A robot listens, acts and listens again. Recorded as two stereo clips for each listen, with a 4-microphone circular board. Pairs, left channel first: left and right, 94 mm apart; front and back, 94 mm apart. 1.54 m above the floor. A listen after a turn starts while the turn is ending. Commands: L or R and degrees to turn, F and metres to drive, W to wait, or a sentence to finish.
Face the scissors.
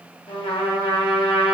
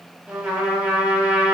W
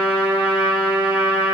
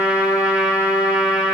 W
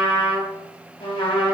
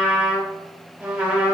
I can't make out scissors, only a trumpet.